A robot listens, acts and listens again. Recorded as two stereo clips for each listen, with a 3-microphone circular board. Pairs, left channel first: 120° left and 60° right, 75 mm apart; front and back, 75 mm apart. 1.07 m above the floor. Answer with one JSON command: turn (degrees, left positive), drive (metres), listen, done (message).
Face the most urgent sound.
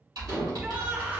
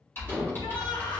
{"turn": 10}
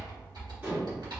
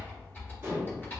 {"listen": true}
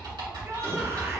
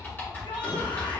{"done": "Facing the shout."}